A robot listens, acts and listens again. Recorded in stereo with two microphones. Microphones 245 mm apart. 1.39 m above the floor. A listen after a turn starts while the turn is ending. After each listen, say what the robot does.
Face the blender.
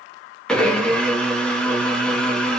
Turn 30° left.
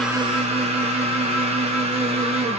Turn 30° right.
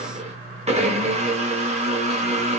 Turn 30° right.
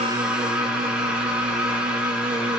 Found it: a blender, straight ahead.